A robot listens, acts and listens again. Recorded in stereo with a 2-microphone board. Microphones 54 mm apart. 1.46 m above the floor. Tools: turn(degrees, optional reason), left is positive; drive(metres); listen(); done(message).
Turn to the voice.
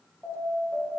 listen()
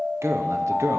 turn(degrees=-60, reason="The man speaking: about 60° right or 120° right.")
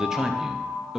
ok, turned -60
turn(degrees=-10, reason="So it is at 10° right.")
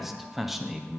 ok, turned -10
done("Found it: a man speaking, straight ahead, under 1 m away.")